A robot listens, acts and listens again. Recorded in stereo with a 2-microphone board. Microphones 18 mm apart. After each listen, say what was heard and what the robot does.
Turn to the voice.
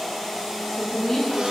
The woman speaking: about 30° left or 150° left. Turn 30° left.
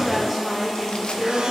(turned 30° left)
Found it: a woman speaking, straight ahead.